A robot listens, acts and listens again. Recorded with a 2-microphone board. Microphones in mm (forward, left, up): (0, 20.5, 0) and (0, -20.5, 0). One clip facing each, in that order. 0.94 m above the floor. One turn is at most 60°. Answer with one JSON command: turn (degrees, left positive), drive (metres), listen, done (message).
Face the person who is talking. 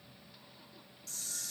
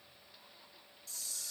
{"listen": true}
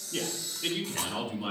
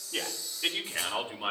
{"turn": -30}
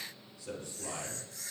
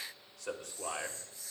{"turn": -60}
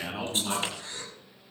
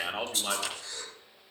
{"turn": -50}
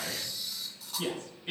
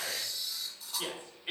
{"turn": -20}
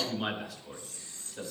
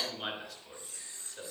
{"done": "Found it: a man speaking, straight ahead."}